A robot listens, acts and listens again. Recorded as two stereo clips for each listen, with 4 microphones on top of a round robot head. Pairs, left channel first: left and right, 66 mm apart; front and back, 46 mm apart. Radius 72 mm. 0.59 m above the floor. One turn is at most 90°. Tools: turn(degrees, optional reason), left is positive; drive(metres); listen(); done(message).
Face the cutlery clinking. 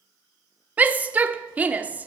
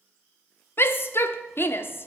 listen()
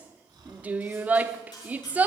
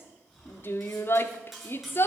turn(degrees=90, reason="The cutlery clinking: 95° left.")
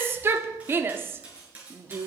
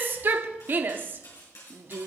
turn(degrees=-20, reason="The cutlery clinking is now 20° right.")
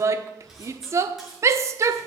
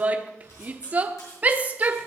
listen()
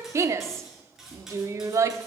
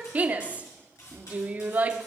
done("Facing the cutlery clinking, over 4 m away.")